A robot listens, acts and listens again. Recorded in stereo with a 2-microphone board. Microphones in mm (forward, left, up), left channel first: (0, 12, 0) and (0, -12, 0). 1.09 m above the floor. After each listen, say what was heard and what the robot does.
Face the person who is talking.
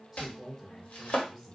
Turn 30° right.
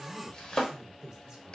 So it is at 140° right. Turn 140° right.
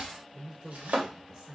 The man speaking is now 10° right. Turn 10° right.
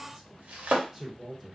Facing the man speaking.